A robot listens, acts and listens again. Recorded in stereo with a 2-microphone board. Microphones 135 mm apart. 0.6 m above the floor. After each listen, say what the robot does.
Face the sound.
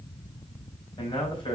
Turn 40° left.
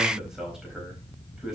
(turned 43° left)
Facing the man speaking.